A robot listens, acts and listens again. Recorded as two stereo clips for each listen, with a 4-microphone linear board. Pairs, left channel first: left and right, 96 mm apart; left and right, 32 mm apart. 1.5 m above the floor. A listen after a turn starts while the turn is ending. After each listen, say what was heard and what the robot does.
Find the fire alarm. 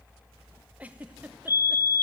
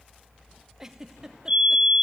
The fire alarm: about 30° right or 150° right. Turn 30° right.
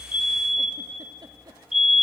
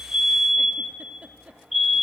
Found it: a fire alarm, straight ahead.